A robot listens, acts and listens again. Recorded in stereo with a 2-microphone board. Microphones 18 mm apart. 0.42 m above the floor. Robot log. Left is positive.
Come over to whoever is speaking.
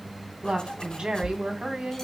note: The woman speaking: about 70° right or 110° right.
cmd yaw -70
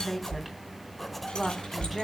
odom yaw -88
note: So it is at 10° left.
cmd yaw +10
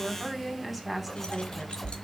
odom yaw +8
cmd fwd 1.0
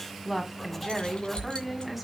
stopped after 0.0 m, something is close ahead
end: Blocked. The woman speaking is further on, straight ahead.